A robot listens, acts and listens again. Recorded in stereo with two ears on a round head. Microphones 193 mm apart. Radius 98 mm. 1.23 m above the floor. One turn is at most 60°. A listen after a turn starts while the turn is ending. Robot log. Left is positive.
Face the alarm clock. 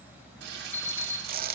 cmd yaw +30
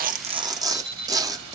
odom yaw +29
note: So it is at 20° right.
cmd yaw -20
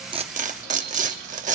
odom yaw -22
cmd idle
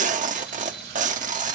cmd idle
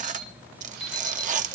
end: Facing the alarm clock, 2 to 4 m away.